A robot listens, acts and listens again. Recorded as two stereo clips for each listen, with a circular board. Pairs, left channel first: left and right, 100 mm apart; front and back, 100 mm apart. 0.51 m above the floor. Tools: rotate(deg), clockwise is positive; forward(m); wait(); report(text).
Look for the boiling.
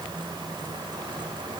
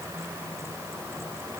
wait()
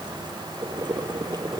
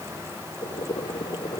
rotate(40)
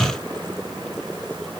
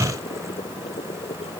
report("Facing the boiling.")